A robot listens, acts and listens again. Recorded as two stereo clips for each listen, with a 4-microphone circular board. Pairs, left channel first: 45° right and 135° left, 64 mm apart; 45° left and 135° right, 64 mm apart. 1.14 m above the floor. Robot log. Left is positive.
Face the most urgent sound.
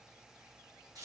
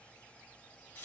cmd idle
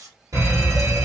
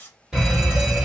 note: The fire alarm: 145° left.
cmd yaw +145
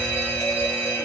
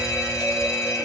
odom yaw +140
end: Found it: a fire alarm, straight ahead, 1 to 2 m away.